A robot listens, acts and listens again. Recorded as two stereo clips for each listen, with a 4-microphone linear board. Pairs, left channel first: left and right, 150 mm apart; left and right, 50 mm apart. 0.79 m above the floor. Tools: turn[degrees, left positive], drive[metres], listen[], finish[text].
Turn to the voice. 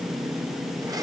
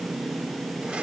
Action: listen[]
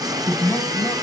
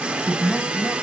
Action: turn[30]
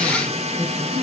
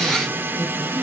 Thought: So it is at 145° left.
Action: turn[145]
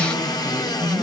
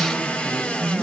Action: finish[Found it: a man speaking, straight ahead.]